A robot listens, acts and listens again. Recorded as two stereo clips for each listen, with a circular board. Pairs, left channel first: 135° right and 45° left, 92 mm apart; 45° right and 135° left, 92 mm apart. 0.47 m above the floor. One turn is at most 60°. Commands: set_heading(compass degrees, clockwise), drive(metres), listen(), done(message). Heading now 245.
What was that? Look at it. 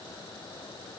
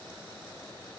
listen()
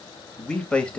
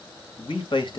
set_heading(305)
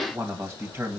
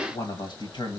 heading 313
set_heading(328)
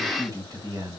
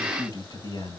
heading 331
set_heading(341)
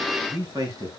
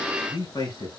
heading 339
done("Found it: a man speaking, straight ahead, 2 to 4 m away.")